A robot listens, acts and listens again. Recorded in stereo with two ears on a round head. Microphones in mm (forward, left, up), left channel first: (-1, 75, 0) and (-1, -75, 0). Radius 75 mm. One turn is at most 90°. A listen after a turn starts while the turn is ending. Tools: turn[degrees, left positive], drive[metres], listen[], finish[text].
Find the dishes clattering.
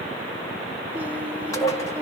Thought: The dishes clattering: about 20° left or 160° left.
Action: turn[20]
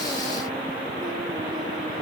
Action: listen[]
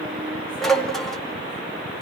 Action: finish[Found it: dishes clattering, straight ahead, 1 to 2 m away.]